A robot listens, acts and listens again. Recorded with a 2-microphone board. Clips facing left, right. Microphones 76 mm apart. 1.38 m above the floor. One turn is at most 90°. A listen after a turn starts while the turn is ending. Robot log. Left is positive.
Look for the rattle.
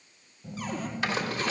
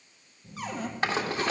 note: The rattle: about 40° right or 140° right.
cmd yaw -40
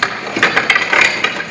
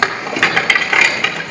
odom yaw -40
end: Found it: a rattle, straight ahead.